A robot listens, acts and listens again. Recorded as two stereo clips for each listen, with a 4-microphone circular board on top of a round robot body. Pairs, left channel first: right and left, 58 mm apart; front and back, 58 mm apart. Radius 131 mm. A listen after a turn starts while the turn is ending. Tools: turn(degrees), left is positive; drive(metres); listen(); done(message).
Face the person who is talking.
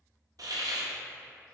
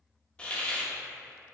listen()
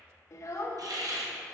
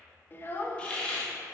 turn(degrees=-55)
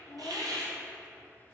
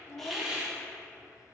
listen()
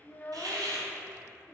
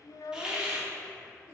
turn(degrees=-25)
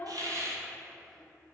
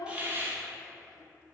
listen()
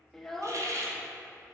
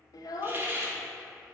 done("Found it: a child speaking, straight ahead, under 1 m away.")